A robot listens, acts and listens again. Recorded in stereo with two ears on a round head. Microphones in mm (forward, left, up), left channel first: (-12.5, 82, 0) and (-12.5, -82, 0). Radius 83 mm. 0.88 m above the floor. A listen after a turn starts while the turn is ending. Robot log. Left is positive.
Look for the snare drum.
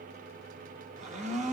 cmd idle
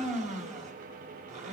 cmd idle
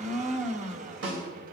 cmd yaw -90
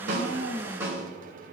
note: So it is at 15° right.
cmd yaw -15
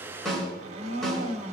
end: Found it: a snare drum, straight ahead, over 4 m away.